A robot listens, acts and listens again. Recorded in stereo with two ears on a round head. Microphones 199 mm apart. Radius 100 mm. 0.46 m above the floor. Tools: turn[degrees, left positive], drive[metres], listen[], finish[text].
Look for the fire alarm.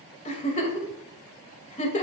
Action: listen[]
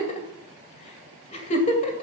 Action: listen[]
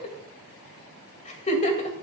Action: finish[I can't make out a fire alarm, only a giggle.]